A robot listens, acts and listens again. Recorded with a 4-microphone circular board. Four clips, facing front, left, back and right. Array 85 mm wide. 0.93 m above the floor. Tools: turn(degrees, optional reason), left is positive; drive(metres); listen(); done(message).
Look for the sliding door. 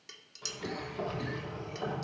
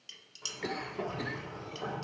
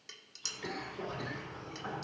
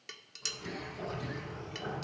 turn(degrees=25, reason="The sliding door: 25° left.")
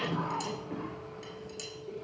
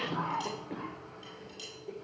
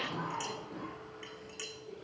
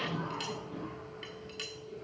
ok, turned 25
done("Facing the sliding door.")